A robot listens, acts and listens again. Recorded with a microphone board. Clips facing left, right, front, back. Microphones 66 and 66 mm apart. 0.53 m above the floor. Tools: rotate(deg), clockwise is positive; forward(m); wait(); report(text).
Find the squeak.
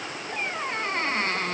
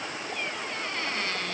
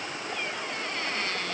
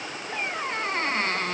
rotate(-135)
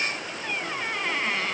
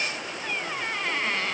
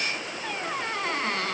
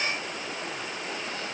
report("Facing the squeak.")